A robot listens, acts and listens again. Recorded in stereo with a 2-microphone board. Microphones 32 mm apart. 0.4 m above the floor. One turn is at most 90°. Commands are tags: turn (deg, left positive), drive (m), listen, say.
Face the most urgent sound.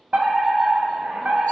<turn deg="-65"/>
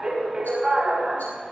<turn deg="-25"/>
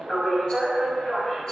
<turn deg="15"/>
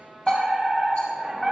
<say>Found it: a fire alarm, straight ahead.</say>